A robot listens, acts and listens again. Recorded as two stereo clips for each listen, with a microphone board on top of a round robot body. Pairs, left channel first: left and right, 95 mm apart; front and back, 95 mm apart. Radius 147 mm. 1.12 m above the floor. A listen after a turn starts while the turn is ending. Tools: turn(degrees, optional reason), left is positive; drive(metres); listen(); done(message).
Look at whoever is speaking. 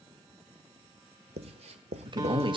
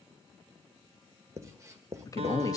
turn(degrees=-55, reason="The man speaking: 55° right.")
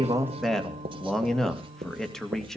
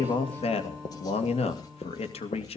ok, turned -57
done("Facing the man speaking, 2 to 4 m away.")